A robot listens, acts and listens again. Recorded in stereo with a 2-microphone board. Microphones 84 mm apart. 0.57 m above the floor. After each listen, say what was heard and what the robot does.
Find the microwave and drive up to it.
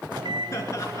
The microwave: about 75° right or 105° right. Turn 75° right.
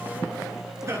Drive 1.0 m forward.
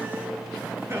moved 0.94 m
Keep listening.
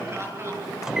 The microwave is now 10° right. Turn 10° right.
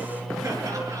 Drive 1.0 m forward.
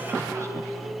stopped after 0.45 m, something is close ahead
I am next to the microwave.